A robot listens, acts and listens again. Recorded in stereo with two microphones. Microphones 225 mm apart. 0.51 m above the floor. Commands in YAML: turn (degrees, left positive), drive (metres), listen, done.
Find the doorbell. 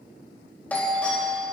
turn: 30
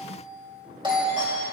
turn: -25
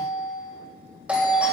done: "Found it: a doorbell, straight ahead."